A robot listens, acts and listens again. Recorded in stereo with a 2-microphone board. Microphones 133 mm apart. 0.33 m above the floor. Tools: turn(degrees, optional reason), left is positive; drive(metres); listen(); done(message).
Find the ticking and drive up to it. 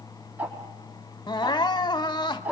turn(degrees=-30)
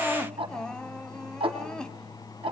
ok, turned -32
turn(degrees=-135, reason="So it is at 135° right.")
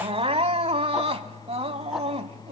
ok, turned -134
listen()
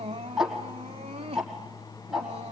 drive(metres=1.0)
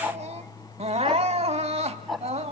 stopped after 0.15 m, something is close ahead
done("Blocked. The ticking is further on, straight ahead.")